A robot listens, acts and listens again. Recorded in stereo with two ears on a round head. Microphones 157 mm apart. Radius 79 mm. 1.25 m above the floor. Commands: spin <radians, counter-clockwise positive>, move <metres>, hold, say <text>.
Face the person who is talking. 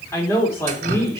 spin 0.52
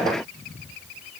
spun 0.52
hold
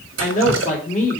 spin 2.36
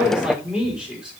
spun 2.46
say Facing the man speaking, 2 to 4 m away.